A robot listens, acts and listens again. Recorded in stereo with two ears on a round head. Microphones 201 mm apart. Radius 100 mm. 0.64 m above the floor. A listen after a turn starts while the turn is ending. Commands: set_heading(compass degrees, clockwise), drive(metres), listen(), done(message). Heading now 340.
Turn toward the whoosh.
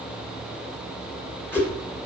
set_heading(310)
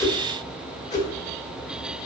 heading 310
set_heading(170)
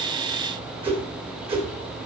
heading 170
set_heading(200)
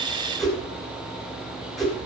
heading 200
done("Found it: a whoosh, straight ahead, 1 to 2 m away.")